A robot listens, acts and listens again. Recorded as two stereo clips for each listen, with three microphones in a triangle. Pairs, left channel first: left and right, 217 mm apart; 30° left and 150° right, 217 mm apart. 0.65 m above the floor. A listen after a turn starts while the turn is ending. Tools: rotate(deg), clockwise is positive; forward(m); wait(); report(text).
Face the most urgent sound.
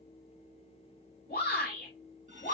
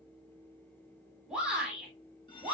rotate(-125)
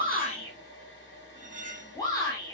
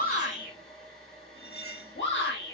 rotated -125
rotate(-20)
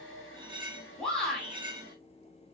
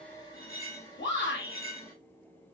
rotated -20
report("Facing the shout.")